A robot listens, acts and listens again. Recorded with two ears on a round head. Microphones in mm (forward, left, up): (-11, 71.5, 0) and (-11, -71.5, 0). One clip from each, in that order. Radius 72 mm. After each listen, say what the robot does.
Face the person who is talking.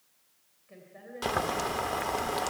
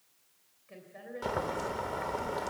Turn 25° right.
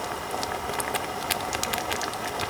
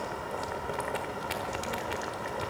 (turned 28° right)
Keep listening.
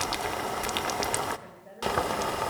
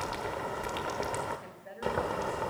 Turn 125° right.
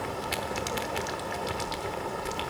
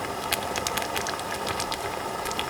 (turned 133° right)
Keep listening.
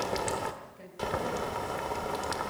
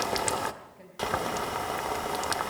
Facing the woman speaking.